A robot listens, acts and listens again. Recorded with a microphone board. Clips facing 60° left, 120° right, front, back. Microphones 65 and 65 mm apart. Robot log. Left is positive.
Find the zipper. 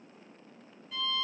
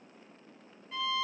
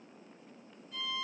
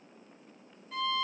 cmd idle
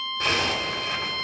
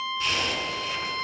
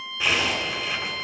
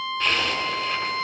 note: The zipper: 80° left.
cmd yaw +80
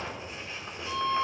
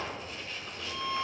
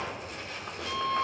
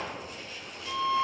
end: Facing the zipper, 2 to 4 m away.